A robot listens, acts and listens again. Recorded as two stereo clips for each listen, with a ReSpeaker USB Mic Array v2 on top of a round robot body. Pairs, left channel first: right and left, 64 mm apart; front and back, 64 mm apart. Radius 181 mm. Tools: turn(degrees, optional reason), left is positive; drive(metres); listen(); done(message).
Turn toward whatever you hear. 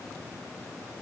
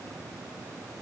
listen()
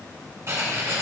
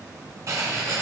turn(degrees=135, reason="The writing: 135° left.")
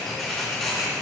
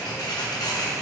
turn(degrees=-10, reason="The writing is now 10° right.")
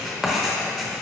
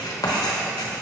done("Facing the writing.")